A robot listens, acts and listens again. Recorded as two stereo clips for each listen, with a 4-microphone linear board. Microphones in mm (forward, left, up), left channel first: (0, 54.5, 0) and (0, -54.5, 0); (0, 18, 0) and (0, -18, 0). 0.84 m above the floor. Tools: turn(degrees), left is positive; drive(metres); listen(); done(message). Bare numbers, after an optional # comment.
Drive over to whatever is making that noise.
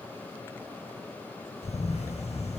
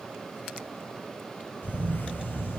turn(90)
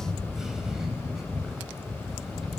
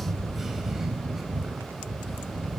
drive(1.0)
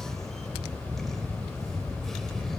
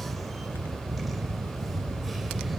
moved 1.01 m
drive(1.0)
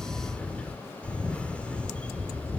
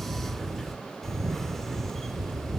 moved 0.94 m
# The camera shutter is now 10° left.
turn(10)
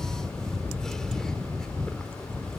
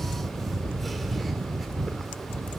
drive(1.0)
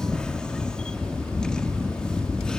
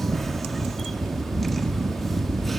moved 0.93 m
drive(1.0)
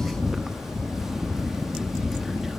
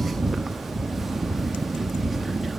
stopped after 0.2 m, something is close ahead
done("Arrived at the camera shutter, straight ahead.")